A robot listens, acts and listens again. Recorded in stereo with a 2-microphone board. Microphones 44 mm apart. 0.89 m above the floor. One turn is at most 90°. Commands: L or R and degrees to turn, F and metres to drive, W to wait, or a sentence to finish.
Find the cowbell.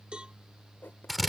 R25
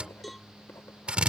Facing the cowbell.